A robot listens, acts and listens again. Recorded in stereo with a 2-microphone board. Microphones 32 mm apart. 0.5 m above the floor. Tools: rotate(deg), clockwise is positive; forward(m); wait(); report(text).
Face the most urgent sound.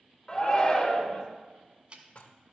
rotate(-25)
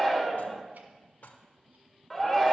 report("Facing the shout.")